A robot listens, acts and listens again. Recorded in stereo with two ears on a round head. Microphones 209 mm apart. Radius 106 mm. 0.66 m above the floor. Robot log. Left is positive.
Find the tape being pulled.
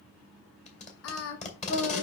note: The tape being pulled: about 30° left or 150° left.
cmd yaw +30
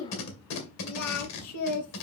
note: So it is at 115° left.
cmd yaw +115
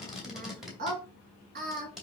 end: Facing the tape being pulled, 2 to 4 m away.